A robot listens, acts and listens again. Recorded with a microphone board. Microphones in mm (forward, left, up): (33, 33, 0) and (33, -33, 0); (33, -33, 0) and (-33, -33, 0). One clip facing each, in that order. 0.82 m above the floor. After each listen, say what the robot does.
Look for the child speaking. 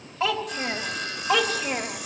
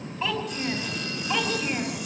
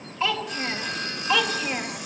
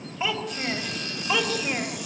Turn 100° left.
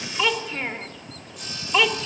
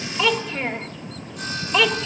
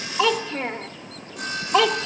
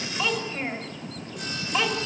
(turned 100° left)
Facing the child speaking, 1 to 2 m away.